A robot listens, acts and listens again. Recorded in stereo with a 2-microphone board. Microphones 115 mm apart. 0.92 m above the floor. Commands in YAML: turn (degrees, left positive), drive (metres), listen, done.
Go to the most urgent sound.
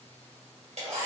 listen: true
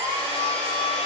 listen: true
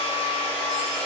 done: "I can't make out anything urgent, only a hair dryer."